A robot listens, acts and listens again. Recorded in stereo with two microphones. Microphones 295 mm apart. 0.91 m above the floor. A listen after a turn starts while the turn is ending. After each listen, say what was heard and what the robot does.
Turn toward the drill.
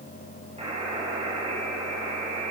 Keep listening.
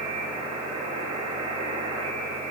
Keep listening.
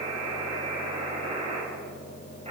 I can't make out a drill to turn to.